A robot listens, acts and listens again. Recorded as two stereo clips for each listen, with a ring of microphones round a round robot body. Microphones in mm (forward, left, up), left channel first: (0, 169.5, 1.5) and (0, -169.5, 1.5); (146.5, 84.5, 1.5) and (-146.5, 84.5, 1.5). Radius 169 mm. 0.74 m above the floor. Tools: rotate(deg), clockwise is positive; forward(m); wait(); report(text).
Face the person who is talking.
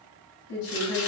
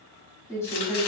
rotate(-85)
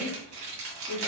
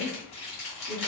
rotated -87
rotate(-20)
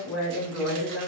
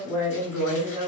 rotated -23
rotate(-10)
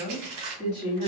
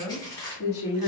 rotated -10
report("Found it: a woman speaking, straight ahead, 2 to 4 m away.")